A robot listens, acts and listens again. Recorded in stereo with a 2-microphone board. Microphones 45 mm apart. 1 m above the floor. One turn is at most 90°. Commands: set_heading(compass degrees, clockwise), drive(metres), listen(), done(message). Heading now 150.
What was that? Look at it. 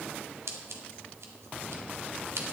set_heading(240)
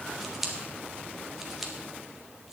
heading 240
done("Found it: scissors, straight ahead.")